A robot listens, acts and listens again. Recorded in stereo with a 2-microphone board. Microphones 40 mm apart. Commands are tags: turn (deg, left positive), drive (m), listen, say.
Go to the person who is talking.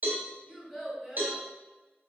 <turn deg="30"/>
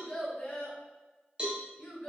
<turn deg="150"/>
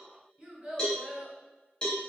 <turn deg="-30"/>
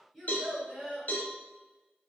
<drive m="1.0"/>
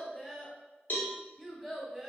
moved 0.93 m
<turn deg="-10"/>
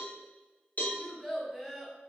<drive m="1.0"/>
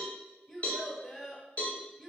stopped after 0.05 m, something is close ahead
<say>I am next to the child speaking.</say>